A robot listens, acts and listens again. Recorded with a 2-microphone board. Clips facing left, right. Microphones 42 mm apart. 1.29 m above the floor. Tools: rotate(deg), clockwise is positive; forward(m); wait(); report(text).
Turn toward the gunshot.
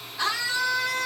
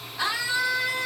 wait()
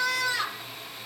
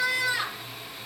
wait()
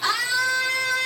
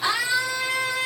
report("I can't make out a gunshot to turn to.")